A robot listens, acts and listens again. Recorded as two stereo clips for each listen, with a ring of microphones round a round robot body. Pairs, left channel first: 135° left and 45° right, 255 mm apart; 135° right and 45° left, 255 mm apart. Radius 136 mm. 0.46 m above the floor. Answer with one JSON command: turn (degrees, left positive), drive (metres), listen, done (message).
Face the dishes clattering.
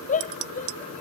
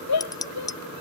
{"turn": -60}
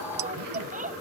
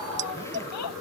{"listen": true}
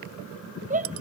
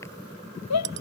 {"done": "Facing the dishes clattering."}